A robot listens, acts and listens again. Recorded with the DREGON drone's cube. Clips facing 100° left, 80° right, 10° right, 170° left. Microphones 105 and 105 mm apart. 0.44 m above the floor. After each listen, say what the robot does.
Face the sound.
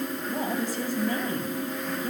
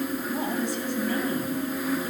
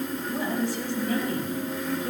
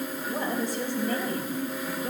Turn 130° left.
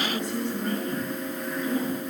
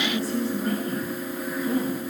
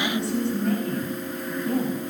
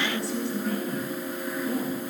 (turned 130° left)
Turn 30° right.
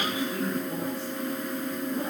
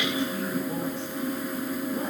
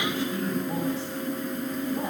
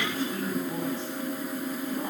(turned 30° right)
Keep listening.
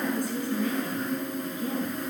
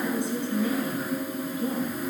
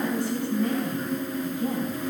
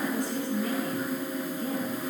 Turn 20° right.
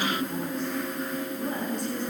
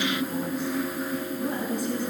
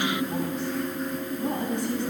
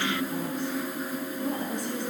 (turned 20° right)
Turn 10° left.
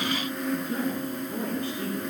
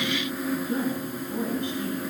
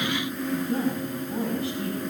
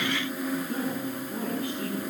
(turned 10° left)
Found it: a woman speaking, straight ahead, over 4 m away.